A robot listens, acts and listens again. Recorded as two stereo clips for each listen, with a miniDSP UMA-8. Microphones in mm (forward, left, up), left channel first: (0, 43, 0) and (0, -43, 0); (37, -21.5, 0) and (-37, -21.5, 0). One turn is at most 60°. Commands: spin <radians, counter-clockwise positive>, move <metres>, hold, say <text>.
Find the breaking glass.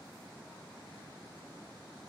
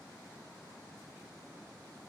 hold
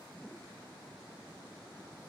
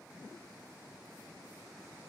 hold
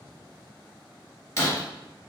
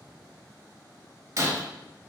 spin 1.05
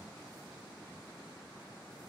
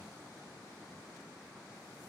spin 1.05
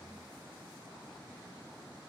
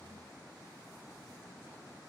spin 0.26
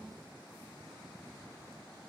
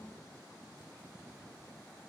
say I heard breaking glass from this way, but can't make it out now.